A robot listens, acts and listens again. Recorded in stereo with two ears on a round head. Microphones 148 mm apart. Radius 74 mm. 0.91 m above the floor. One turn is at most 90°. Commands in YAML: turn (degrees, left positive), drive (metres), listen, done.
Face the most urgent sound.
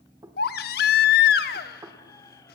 turn: 60
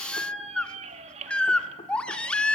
done: "Found it: a baby crying, straight ahead."